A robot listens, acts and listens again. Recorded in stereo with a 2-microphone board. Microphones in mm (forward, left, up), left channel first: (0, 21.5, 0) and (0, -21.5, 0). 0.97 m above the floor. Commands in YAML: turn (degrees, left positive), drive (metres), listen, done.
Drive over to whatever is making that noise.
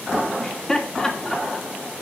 turn: 20
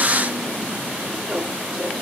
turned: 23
drive: 1.0
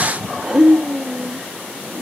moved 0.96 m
drive: 1.0
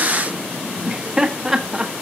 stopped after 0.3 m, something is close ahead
turn: -10
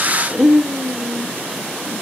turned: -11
done: "I am next to the laughter."